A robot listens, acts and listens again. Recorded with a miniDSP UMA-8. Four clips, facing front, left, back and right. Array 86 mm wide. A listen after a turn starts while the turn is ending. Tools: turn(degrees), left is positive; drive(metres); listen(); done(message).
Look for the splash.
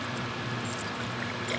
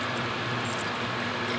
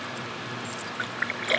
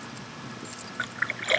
turn(degrees=-130)
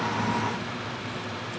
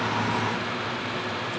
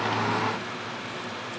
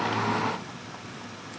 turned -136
done("I heard a splash from this way, but can't make it out now.")